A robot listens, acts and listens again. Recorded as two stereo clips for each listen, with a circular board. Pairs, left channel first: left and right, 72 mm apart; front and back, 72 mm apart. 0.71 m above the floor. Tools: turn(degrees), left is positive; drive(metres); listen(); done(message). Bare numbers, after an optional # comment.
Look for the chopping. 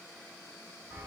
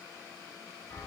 listen()
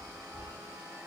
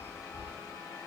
listen()
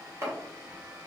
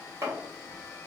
# The chopping: 140° right.
turn(-140)
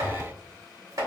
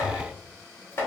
# The chopping is now 55° right.
turn(-55)
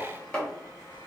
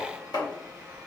# The chopping is now 10° left.
turn(10)
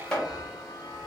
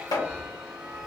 # The chopping is now 10° left.
turn(10)
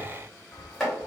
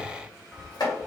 done("Facing the chopping.")